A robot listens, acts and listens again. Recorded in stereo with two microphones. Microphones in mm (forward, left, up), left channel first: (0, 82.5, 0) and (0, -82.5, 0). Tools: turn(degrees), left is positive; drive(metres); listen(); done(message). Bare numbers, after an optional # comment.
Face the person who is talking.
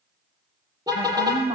# The woman speaking: about 45° right or 135° right.
turn(-45)
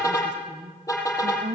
# So it is at 55° right.
turn(-55)
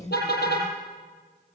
# The woman speaking is now 20° left.
turn(20)
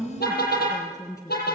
# The woman speaking is now 20° left.
turn(20)
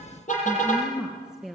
done("Found it: a woman speaking, straight ahead.")